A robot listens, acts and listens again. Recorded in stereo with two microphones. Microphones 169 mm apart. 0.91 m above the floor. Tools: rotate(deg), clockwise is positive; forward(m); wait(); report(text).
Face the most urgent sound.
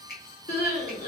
rotate(-55)
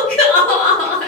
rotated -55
report("Facing the crying, 1 to 2 m away.")